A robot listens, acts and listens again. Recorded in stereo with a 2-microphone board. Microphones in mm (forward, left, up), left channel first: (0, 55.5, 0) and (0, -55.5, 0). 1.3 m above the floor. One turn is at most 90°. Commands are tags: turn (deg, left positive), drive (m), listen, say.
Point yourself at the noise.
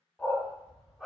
<turn deg="30"/>
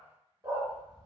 <turn deg="-30"/>
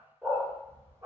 <turn deg="-30"/>
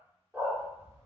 <turn deg="-25"/>
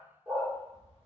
<turn deg="-20"/>
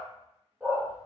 <turn deg="-15"/>
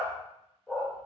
<say>Found it: a dog barking, straight ahead.</say>